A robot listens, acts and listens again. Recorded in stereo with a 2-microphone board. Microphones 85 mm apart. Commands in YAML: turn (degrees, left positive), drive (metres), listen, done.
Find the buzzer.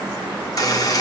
turn: 40
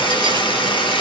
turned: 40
turn: 95
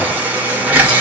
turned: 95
turn: -20
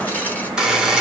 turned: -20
turn: -10
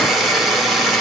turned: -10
done: "Found it: a buzzer, straight ahead."